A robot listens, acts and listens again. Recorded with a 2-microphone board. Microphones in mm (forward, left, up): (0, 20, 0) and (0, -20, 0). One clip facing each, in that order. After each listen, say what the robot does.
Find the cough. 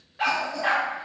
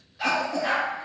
Turn 90° right.
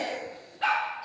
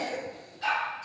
Turn 15° left.
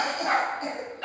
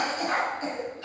Facing the cough.